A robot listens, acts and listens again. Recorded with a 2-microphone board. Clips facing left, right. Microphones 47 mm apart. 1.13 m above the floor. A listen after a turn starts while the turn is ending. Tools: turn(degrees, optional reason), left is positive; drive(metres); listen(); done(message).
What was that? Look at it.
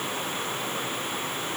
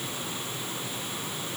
listen()
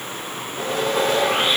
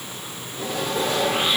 turn(degrees=50, reason="The sawing: about 50° left or 130° left.")
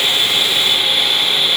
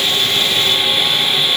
done("Facing the sawing, 2 to 4 m away.")